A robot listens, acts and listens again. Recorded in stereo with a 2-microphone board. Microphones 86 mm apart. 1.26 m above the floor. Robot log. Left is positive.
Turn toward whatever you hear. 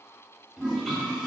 cmd yaw -30
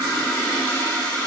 note: So it is at 25° left.
cmd yaw +25
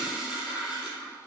note: The toilet flushing is now 20° right.
cmd yaw -20
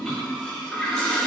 end: Facing the toilet flushing.